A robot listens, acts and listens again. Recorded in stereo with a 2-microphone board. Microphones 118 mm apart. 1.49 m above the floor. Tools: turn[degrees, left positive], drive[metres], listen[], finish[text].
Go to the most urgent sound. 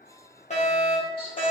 Thought: The fire alarm: about 75° left or 105° left.
Action: turn[75]
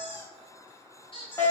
Thought: So it is at 25° left.
Action: turn[25]
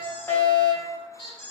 Thought: The fire alarm is now 20° left.
Action: turn[20]
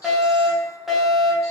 Action: drive[1.0]
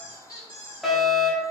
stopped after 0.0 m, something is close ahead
Action: finish[Something is in my way. I am facing the fire alarm but have not reached it.]